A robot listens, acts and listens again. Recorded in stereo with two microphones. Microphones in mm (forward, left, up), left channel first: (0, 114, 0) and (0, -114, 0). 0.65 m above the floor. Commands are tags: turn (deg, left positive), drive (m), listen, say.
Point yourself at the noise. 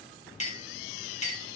<turn deg="30"/>
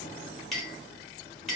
<say>Facing the clink.</say>